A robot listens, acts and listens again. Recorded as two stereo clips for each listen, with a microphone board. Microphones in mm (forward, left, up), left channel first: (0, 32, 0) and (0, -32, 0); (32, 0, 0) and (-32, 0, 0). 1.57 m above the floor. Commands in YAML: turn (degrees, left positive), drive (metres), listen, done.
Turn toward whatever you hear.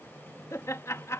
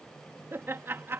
turn: 130
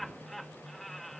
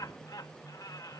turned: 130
done: "Facing the laughter."